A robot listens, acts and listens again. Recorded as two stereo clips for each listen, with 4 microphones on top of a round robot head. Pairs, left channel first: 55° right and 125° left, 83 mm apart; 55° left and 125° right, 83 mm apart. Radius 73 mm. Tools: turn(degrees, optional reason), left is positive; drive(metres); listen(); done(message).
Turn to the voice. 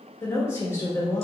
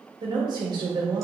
turn(degrees=-110, reason="The woman speaking: 110° right.")
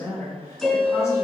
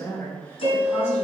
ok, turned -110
done("Facing the woman speaking, 1 to 2 m away.")